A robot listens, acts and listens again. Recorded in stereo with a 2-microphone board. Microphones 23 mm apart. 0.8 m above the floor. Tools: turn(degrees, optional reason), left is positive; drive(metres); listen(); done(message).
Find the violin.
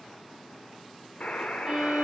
turn(degrees=-30, reason="The violin: about 30° right or 150° right.")
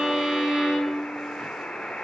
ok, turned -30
turn(degrees=-120, reason="So it is at 120° right.")
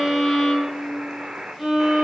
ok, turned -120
turn(degrees=-10, reason="The violin is now 10° right.")
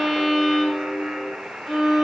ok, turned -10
done("Found it: a violin, straight ahead.")